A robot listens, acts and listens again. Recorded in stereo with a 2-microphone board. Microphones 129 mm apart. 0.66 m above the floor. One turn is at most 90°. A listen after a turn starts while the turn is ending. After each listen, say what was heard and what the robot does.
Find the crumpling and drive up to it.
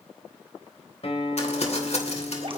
The crumpling: about 55° left or 125° left. Turn 55° left.
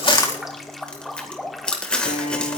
So it is at 10° left. Turn 10° left.
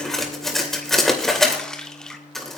Drive 1.0 m forward.
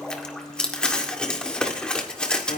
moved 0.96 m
The crumpling is now 10° left. Turn 10° left.
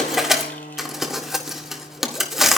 Drive 1.0 m forward.
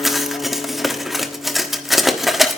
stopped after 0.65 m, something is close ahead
I am next to the crumpling.